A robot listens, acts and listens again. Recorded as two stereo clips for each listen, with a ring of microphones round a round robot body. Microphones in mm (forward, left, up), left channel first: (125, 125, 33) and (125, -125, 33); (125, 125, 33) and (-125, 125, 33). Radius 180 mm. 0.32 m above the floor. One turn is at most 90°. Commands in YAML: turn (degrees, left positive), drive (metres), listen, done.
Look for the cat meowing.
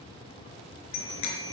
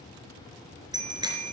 listen: true
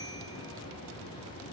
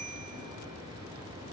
listen: true
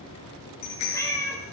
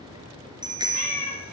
turn: 15
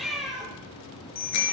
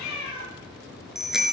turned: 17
done: "Found it: a cat meowing, straight ahead, over 4 m away."